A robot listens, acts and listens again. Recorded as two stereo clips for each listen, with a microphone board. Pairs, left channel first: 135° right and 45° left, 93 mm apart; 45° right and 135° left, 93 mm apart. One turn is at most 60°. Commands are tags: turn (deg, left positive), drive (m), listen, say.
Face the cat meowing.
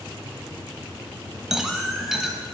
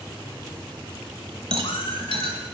<turn deg="-45"/>
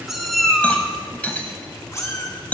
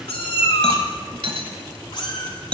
<turn deg="-60"/>
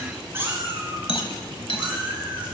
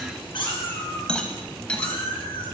<turn deg="-30"/>
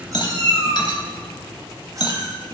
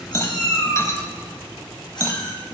<say>Found it: a cat meowing, straight ahead.</say>